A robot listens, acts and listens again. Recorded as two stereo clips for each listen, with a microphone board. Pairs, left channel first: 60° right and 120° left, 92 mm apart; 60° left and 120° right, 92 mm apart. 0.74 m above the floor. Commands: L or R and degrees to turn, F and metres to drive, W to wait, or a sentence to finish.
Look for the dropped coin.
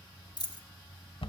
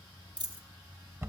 R95
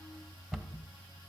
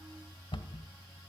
Facing where the dropped coin came from. I can't hear it now.